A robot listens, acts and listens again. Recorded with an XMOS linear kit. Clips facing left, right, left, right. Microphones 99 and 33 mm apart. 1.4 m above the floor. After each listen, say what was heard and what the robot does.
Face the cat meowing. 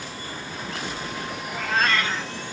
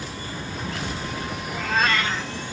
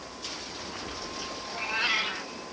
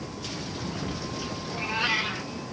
Turn 30° right.
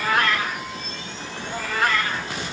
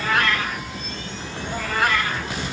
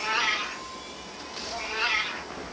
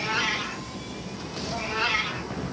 Turn 30° right.
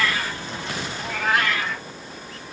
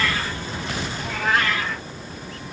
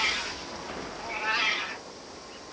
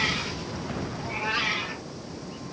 So it is at 10° left. Turn 10° left.
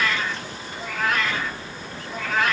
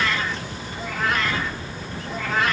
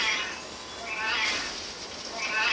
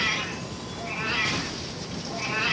Found it: a cat meowing, straight ahead, 2 to 4 m away.